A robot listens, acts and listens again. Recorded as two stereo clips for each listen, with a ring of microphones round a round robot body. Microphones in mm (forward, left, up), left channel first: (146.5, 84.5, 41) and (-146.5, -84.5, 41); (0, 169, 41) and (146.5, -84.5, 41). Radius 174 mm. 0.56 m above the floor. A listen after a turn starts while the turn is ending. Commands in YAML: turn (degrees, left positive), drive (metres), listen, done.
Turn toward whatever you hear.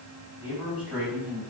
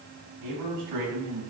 turn: -60
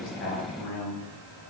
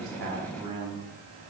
turn: 10
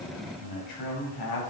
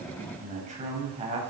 turn: 10
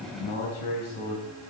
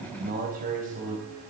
done: "Found it: a man speaking, straight ahead, 2 to 4 m away."